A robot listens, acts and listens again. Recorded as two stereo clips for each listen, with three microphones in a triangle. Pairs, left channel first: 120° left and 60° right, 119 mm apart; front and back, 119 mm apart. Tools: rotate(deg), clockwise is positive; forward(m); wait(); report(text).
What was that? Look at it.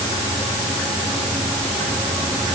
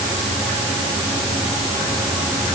wait()
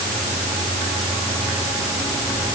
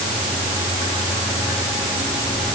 wait()
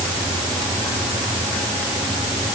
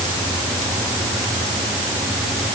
report("I can't make out anything.")